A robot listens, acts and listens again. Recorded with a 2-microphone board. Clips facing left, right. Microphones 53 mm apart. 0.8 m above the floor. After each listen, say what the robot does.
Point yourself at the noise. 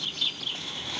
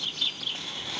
Keep listening.
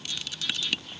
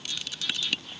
Keep listening.
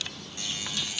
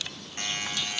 Turn 50° right.
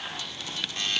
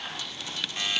Turn 10° right.
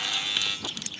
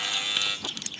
Facing the buzzer, 2 to 4 m away.